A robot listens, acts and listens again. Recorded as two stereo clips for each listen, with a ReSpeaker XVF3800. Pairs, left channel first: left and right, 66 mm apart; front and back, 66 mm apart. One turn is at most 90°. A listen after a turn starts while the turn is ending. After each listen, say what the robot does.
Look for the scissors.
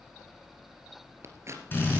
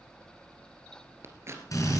Turn 90° right.
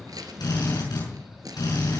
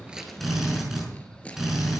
Turn 70° right.
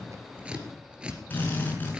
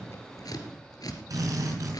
Turn 15° right.
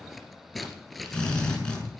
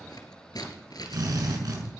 Found it: scissors, straight ahead, 2 to 4 m away.